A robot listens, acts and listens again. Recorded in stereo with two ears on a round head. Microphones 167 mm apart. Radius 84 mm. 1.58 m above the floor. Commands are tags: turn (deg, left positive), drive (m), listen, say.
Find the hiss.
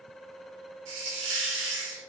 <turn deg="-70"/>
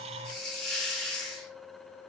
<say>Found it: a hiss, straight ahead, 2 to 4 m away.</say>